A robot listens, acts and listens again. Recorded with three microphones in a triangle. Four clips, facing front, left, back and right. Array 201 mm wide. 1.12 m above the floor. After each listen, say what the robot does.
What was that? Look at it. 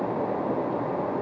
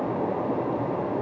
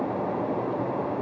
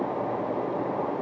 Keep listening.
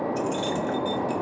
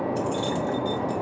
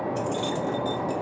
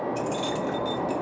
Turn 40° right.
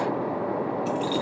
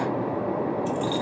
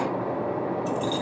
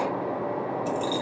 Turn 30° left.
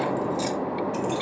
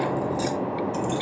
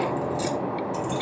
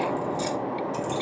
Turn 25° left.
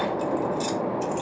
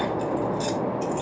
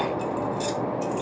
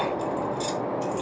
Turn 15° left.
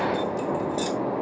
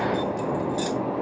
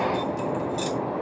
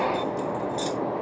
Found it: keys jangling, straight ahead.